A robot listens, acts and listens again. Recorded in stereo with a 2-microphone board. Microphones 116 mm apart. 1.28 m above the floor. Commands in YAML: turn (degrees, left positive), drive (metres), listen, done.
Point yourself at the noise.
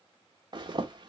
turn: -45
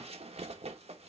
turn: -85
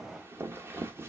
turn: -20
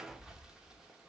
done: "Facing the zipper, 1 to 2 m away."